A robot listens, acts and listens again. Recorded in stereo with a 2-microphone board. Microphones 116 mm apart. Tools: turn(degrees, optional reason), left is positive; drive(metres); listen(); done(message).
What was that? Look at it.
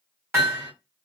turn(degrees=-20, reason="The hammering: about 20° right or 160° right.")
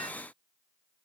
listen()
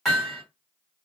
done("Found it: hammering, straight ahead, 2 to 4 m away.")